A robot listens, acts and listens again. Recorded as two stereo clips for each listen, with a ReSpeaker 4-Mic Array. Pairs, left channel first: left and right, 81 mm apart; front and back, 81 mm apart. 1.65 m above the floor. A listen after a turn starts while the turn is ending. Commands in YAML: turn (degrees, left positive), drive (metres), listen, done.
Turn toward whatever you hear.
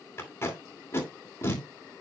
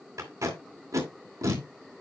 turn: 145
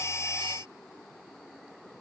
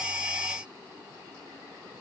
listen: true
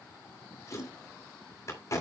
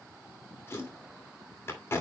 turn: 55
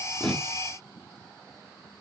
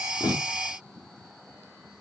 listen: true
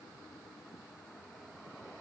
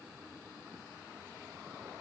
listen: true
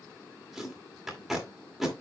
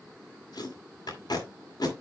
done: "Found it: tape being pulled, straight ahead."